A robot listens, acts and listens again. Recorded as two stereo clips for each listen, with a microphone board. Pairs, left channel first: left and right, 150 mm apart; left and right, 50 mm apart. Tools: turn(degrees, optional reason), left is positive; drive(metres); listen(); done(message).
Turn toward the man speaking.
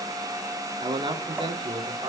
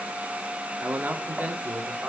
turn(degrees=-35, reason="The man speaking: about 35° right or 145° right.")
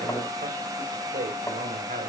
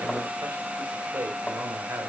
turn(degrees=-110, reason="So it is at 110° right.")
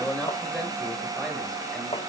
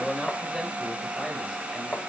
done("Found it: a man speaking, straight ahead, over 4 m away.")